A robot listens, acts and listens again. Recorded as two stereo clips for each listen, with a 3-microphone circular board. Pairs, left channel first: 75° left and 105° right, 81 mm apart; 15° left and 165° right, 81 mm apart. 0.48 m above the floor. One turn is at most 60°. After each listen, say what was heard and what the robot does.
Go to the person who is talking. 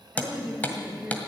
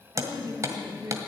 The woman speaking: straight behind. Turn 60° left.
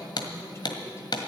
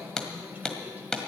The woman speaking is now 125° left. Turn 60° left.
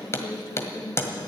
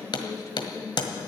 The woman speaking is now 50° left. Turn 50° left.
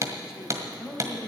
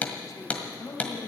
The woman speaking is now 25° right. Turn 25° right.
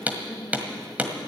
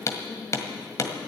Keep listening.
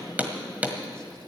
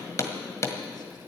Keep listening.
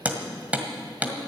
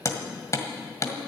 I heard a woman speaking from this way, but can't make it out now. I did not reach it.